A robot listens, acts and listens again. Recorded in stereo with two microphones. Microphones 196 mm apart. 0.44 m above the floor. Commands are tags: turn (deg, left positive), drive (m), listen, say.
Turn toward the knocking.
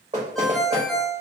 <turn deg="-35"/>
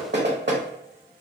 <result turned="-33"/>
<turn deg="-105"/>
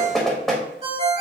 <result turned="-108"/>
<say>Found it: knocking, straight ahead, 1 to 2 m away.</say>